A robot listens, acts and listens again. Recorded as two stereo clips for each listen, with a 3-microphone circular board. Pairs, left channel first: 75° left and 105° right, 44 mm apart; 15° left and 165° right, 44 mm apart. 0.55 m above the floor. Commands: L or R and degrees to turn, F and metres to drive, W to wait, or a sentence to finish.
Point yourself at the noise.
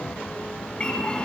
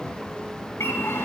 Found it: a bird, straight ahead, 1 to 2 m away.